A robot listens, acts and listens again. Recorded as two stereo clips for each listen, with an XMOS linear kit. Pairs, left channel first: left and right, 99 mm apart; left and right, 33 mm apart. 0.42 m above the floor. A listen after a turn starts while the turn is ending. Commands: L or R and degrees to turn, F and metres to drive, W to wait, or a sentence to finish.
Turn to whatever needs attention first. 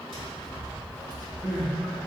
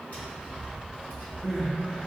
L30
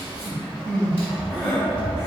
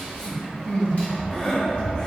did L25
L155
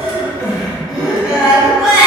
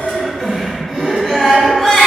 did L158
Facing the crying, under 1 m away.